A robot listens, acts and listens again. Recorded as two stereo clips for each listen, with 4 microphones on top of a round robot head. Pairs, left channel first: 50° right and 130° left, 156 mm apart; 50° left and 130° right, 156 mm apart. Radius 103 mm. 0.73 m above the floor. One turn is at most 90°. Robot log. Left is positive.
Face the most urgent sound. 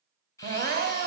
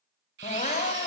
note: The crying: 100° left.
cmd yaw +90
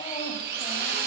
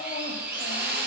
note: Nothing new. It was at 10° left.
cmd yaw +10
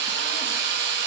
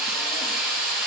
cmd idle
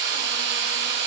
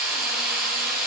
end: I heard crying from this way, but can't make it out now.